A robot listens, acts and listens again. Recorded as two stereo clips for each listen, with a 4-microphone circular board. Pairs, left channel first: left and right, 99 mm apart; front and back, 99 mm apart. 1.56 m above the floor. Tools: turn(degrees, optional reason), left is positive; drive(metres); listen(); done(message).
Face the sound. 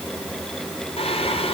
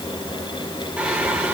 turn(degrees=105, reason="The singing: 105° left.")
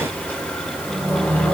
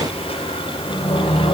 turn(degrees=20, reason="The singing is now 20° left.")
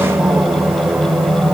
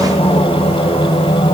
done("Found it: singing, straight ahead.")